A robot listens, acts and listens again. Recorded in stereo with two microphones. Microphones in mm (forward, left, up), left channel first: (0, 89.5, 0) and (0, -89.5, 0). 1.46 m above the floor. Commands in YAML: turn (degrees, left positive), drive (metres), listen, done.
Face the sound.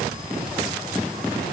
listen: true
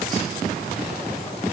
listen: true
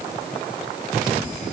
done: "I can't make out anything."